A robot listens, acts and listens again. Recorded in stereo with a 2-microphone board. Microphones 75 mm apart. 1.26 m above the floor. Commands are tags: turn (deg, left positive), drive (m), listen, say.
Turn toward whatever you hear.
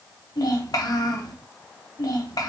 <turn deg="55"/>
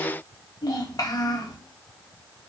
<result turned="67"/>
<turn deg="55"/>
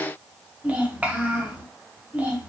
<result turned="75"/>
<turn deg="-20"/>
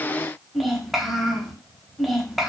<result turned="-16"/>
<say>Facing the child speaking.</say>